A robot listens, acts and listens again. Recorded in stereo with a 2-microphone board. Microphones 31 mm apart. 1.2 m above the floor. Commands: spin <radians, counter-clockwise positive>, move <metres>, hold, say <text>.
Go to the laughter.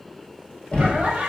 spin -0.87
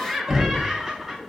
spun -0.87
move 1.0
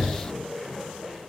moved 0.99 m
move 1.0
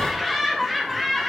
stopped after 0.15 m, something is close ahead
say I am next to the laughter.